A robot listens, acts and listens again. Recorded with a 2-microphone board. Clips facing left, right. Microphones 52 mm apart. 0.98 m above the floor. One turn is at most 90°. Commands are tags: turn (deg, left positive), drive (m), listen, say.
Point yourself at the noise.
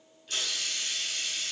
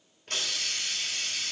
<turn deg="-50"/>
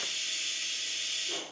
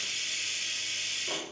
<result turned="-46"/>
<turn deg="-80"/>
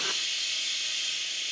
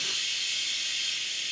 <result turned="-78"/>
<say>Found it: a hiss, straight ahead, 1 to 2 m away.</say>